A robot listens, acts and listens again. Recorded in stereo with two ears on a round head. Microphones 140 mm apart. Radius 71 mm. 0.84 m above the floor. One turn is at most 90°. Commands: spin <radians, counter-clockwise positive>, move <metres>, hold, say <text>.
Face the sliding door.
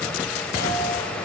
hold
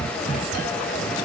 hold
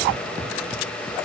say I can't make out a sliding door to turn to.